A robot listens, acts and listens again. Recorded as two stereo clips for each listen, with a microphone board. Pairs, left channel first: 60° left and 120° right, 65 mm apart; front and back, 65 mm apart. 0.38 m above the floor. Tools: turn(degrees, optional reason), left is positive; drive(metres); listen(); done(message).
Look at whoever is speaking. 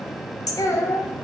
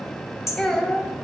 turn(degrees=80, reason="The child speaking: 80° left.")
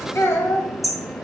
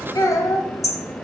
turn(degrees=15, reason="The child speaking is now 15° left.")
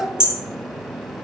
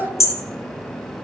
done("Facing the child speaking, 1 to 2 m away.")